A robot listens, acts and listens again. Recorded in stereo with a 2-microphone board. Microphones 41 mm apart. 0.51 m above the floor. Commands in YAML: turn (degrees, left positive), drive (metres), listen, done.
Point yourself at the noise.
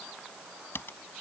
turn: 70
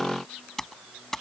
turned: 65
turn: 10
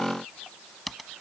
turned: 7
done: "Facing the typing on a keyboard."